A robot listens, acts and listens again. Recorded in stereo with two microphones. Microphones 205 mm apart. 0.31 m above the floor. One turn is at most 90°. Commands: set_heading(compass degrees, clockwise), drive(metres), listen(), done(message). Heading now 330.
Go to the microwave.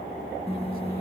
set_heading(300)
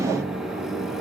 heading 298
drive(1.0)
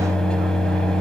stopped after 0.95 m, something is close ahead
done("I am next to the microwave.")